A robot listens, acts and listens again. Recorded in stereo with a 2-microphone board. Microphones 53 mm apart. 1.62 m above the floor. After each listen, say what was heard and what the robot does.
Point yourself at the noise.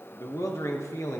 Turn 90° left.
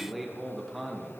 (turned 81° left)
Facing the man speaking, 1 to 2 m away.